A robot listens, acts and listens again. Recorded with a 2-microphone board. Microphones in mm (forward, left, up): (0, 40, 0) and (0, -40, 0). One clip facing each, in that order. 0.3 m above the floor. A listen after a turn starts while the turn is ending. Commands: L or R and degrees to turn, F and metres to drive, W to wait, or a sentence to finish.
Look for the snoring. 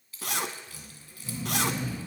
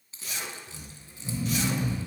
R30
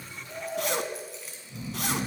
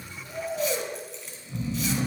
R135
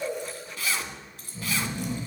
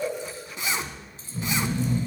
R45
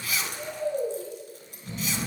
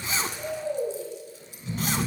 R15
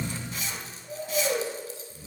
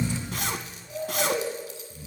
Facing the snoring.